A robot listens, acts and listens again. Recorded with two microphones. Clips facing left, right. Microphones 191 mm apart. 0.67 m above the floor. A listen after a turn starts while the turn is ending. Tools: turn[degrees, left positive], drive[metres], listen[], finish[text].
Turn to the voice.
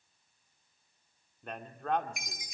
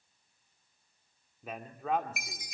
Action: turn[-30]
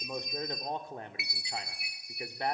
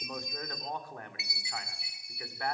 Thought: So it is at 30° left.
Action: turn[30]
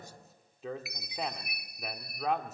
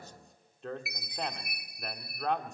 Action: finish[Found it: a man speaking, straight ahead.]